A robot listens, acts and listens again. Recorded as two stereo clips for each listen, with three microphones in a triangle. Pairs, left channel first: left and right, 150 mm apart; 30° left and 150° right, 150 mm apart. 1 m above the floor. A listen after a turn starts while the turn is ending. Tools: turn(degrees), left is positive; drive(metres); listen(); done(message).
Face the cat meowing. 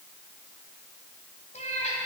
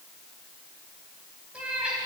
turn(degrees=125)
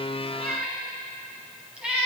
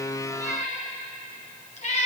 turn(degrees=-10)
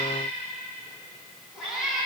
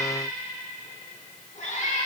done("Found it: a cat meowing, straight ahead.")